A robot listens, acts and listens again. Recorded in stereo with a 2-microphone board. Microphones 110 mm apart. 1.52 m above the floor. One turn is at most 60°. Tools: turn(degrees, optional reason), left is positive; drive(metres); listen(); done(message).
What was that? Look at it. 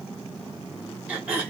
turn(degrees=-30)
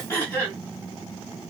turn(degrees=20, reason="So it is at 20° left.")
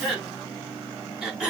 done("Found it: throat clearing, straight ahead, over 4 m away.")